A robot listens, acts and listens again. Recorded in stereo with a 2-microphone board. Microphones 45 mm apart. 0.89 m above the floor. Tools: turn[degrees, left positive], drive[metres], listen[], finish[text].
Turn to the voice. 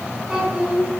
Action: turn[-30]
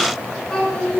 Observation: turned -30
Thought: So it is at 15° left.
Action: turn[15]
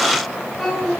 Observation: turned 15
Action: finish[Found it: a child speaking, straight ahead.]